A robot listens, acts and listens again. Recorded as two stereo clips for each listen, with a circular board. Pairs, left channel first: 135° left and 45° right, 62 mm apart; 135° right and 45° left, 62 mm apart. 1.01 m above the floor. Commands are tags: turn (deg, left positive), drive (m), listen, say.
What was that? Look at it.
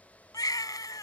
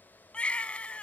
<turn deg="155"/>
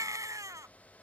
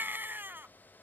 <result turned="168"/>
<turn deg="-15"/>
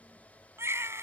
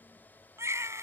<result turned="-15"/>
<say>Facing the baby crying.</say>